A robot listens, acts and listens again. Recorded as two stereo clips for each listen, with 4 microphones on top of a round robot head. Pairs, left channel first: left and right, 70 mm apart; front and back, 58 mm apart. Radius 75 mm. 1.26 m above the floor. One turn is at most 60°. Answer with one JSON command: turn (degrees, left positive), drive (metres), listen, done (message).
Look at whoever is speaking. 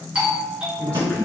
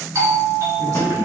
{"turn": 60}
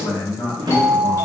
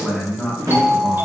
{"turn": 60}
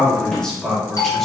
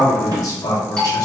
{"done": "Found it: a man speaking, straight ahead."}